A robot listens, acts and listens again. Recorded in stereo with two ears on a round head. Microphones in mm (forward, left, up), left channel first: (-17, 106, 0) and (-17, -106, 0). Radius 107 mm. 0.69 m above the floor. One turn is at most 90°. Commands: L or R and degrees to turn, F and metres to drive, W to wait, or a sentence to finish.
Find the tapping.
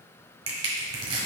W
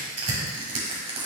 W
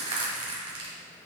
I can't make out tapping, only crushing.